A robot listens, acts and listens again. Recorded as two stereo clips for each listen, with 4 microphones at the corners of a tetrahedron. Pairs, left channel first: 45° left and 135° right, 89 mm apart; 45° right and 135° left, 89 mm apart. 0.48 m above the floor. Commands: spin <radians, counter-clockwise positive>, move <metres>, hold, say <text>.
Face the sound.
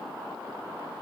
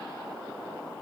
hold
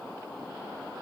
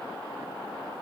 hold
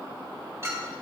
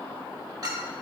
spin 2.97
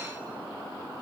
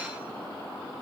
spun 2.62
spin 0.35
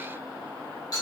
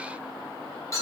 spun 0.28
say Found it: a clink, straight ahead, 1 to 2 m away.